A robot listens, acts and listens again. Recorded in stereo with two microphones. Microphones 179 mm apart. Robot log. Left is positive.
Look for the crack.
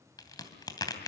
note: The crack: about 20° left or 160° left.
cmd yaw +20
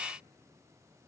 cmd idle
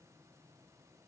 end: I heard a crack, but can't make it out now. It was about straight ahead or 140° left.